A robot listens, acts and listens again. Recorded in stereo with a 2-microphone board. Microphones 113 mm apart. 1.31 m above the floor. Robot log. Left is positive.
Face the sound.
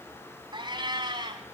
note: The cat meowing: about 40° right or 140° right.
cmd yaw -40
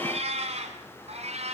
note: So it is at 115° right.
cmd yaw -115
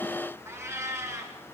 note: The cat meowing is now 25° right.
cmd yaw -25
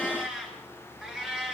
end: Facing the cat meowing, over 4 m away.